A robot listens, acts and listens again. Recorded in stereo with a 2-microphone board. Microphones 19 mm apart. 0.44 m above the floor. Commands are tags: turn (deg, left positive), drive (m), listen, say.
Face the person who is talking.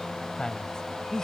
<turn deg="35"/>
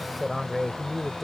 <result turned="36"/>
<turn deg="-10"/>
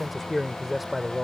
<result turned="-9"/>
<turn deg="-20"/>
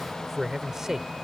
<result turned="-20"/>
<turn deg="-30"/>
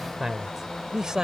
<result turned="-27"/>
<turn deg="-40"/>
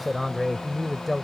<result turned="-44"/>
<say>Found it: a man speaking, straight ahead.</say>